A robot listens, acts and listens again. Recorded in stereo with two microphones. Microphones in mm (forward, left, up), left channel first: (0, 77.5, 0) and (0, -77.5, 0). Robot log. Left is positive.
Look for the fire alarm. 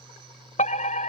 note: The fire alarm: about 50° left or 130° left.
cmd yaw +50
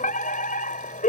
note: So it is at 70° left.
cmd yaw +70
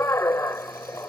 note: The fire alarm is now 20° left.
cmd yaw +20
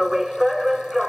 end: Found it: a fire alarm, straight ahead.